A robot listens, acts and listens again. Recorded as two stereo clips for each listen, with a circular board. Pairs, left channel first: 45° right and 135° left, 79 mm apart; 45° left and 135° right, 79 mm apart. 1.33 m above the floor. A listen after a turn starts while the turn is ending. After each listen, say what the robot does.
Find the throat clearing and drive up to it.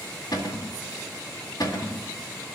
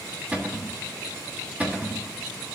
Keep listening.
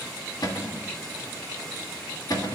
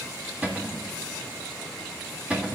Keep listening.
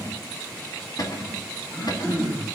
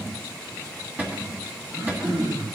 Turn 105° right.
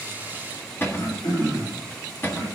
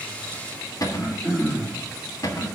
Turn 30° right.
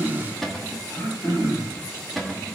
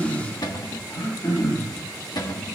Drive 1.0 m forward.
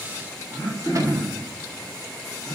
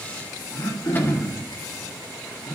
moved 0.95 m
Drive 1.0 m forward.
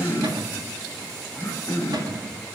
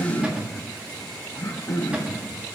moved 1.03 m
Drive 1.0 m forward.
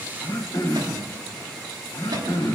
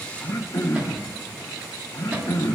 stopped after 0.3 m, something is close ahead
Arrived at the throat clearing, straight ahead.